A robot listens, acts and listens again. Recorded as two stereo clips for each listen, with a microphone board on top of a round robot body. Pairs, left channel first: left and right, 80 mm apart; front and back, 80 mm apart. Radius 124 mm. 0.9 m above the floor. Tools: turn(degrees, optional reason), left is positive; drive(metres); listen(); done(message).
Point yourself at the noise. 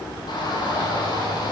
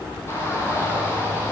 turn(degrees=60, reason="The shout: 60° left.")
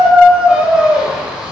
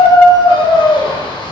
turn(degrees=-15, reason="The shout is now 15° right.")
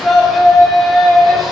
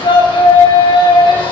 done("Facing the shout.")